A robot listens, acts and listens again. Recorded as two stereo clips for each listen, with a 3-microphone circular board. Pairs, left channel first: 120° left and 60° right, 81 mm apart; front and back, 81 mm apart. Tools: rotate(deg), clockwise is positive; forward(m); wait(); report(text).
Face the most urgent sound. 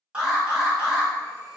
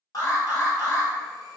rotate(-15)
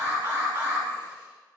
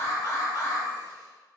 report("Found it: an alarm, straight ahead, 1 to 2 m away.")